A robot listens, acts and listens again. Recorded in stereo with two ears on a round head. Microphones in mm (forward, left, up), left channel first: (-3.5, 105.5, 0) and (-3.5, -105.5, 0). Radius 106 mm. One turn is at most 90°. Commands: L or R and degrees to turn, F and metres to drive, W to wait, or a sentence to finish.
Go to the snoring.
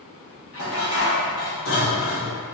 W
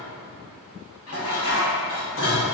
W
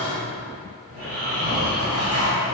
R40
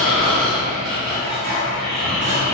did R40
F1.0
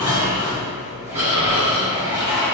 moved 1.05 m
R10
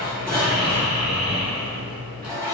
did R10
F1.0
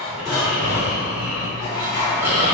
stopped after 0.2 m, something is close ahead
R10
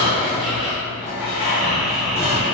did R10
I am next to the snoring.